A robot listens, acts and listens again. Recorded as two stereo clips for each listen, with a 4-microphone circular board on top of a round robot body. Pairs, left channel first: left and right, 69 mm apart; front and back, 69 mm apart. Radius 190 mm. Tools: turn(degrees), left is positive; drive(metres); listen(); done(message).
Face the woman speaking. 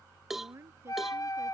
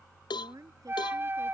turn(degrees=-145)
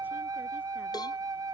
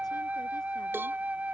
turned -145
listen()
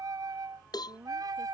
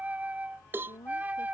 turn(degrees=-25)
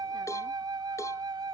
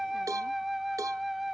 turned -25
listen()
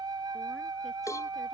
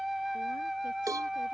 listen()
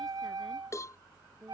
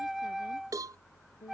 done("Facing the woman speaking.")